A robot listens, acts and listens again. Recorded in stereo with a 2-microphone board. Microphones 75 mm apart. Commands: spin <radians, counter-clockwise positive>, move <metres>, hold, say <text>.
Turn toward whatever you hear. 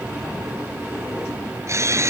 spin -0.70
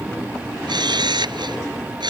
spin -1.75
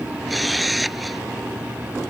say Found it: a camera shutter, straight ahead.